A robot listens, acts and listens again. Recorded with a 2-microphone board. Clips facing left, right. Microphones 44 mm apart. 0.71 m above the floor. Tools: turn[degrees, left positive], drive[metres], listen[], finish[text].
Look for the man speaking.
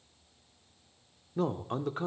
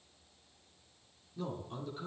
Thought: The man speaking: about 65° left or 115° left.
Action: turn[65]
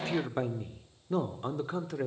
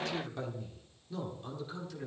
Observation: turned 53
Thought: So it is at 60° left.
Action: turn[60]
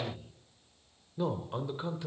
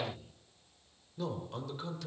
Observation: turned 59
Thought: The man speaking is now 25° left.
Action: turn[25]
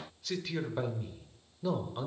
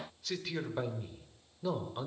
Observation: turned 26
Action: finish[Facing the man speaking, 2 to 4 m away.]